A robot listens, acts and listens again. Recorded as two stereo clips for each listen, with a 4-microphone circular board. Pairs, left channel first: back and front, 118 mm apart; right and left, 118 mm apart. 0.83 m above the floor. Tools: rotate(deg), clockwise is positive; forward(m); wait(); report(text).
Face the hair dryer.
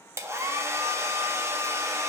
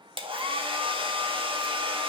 rotate(-60)
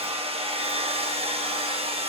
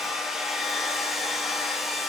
report("Found it: a hair dryer, straight ahead, 1 to 2 m away.")